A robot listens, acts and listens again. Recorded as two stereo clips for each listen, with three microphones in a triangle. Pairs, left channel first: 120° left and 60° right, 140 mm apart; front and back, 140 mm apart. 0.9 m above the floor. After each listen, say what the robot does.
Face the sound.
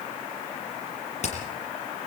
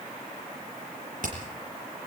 Turn 160° left.
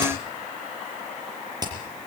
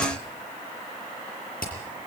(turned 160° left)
Facing the hammering, over 4 m away.